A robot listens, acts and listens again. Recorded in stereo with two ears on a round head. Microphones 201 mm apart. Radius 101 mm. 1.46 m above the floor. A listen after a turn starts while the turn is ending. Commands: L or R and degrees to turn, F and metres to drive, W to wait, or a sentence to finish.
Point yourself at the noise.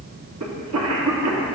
R75
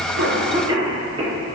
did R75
R20
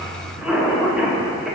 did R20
Facing the cough.